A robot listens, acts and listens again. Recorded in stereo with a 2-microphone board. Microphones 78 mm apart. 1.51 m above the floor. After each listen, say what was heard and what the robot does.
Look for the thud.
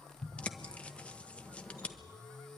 Turn 90° left.
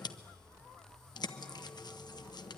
Facing where the thud came from. I can't hear it now.